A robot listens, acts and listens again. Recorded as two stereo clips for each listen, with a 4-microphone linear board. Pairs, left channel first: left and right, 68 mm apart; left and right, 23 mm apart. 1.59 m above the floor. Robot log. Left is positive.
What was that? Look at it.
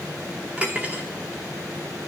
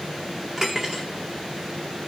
note: The cutlery clinking: about 20° right or 160° right.
cmd yaw -20
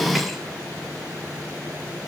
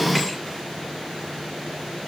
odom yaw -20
cmd idle
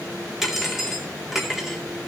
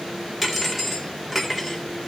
end: Found it: cutlery clinking, straight ahead.